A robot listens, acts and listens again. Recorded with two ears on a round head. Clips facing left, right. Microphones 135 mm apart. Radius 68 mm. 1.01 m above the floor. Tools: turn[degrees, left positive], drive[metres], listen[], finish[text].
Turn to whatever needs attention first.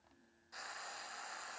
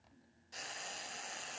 Action: listen[]
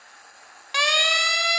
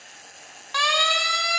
Thought: The siren: about 20° left or 160° left.
Action: turn[20]
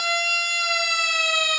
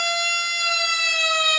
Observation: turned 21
Action: finish[Facing the siren.]